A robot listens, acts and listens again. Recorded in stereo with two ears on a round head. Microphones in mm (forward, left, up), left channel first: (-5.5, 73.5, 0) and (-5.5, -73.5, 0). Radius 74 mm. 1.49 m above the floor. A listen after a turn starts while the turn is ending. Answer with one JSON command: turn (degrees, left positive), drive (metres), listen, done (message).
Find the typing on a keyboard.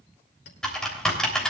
{"turn": 30}
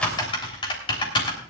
{"turn": 150}
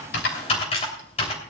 {"turn": 35}
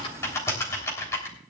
{"turn": 15}
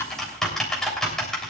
{"done": "Facing the typing on a keyboard, 2 to 4 m away."}